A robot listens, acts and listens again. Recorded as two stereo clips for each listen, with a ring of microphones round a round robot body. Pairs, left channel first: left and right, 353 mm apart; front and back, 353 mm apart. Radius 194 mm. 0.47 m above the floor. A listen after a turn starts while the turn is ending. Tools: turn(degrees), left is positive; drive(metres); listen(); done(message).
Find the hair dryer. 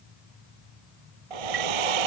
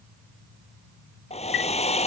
turn(degrees=-75)
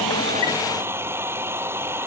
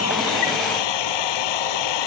done("Found it: a hair dryer, straight ahead.")